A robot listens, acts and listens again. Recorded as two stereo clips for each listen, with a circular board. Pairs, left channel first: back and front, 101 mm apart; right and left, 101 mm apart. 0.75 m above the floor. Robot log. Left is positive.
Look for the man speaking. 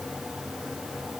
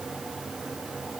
cmd idle
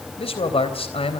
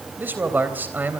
note: The man speaking: 160° left.
cmd yaw +160
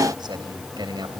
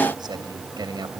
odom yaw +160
note: The man speaking is now 45° left.
cmd yaw +45
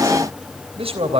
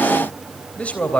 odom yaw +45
note: The man speaking is now 15° right.
cmd yaw -15
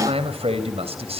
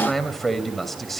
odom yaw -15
end: Facing the man speaking.